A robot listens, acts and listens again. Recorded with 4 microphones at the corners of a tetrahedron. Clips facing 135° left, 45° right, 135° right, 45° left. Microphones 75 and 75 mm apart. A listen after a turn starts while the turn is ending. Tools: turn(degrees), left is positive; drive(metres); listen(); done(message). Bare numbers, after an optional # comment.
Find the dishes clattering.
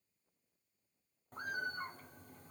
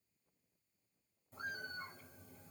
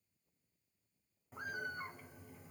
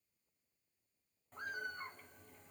listen()
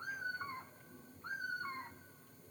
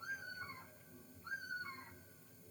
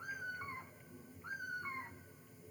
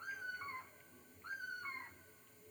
listen()
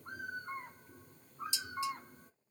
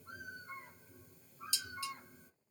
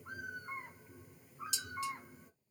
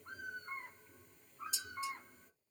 # The dishes clattering: 155° right.
turn(-155)
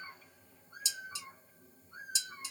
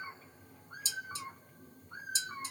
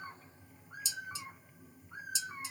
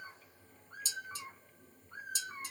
done("Facing the dishes clattering.")